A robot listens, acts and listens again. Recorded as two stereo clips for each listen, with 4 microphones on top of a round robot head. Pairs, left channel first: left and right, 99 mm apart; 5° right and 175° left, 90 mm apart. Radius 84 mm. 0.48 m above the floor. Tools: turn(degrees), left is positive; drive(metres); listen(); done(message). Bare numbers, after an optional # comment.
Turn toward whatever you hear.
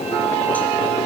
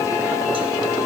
listen()
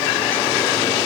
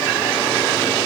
listen()
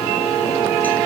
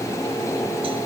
done("I can't make out anything.")